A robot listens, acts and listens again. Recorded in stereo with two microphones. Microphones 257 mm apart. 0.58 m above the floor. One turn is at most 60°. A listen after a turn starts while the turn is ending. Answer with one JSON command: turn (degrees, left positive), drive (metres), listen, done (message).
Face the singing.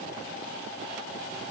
{"listen": true}
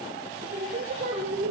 {"turn": -30}
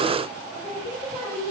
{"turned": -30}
{"done": "Facing the singing."}